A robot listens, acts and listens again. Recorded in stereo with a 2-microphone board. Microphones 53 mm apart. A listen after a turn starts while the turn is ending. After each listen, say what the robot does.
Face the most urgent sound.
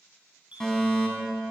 Turn 30° left.
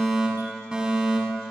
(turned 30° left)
Turn 15° right.
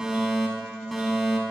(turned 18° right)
Facing the fire alarm, over 4 m away.